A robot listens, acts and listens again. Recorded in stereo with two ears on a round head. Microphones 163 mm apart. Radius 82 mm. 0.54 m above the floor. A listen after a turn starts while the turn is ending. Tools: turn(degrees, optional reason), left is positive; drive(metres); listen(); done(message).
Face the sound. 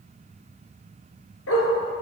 turn(degrees=90)
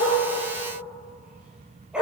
done("Facing the dog barking.")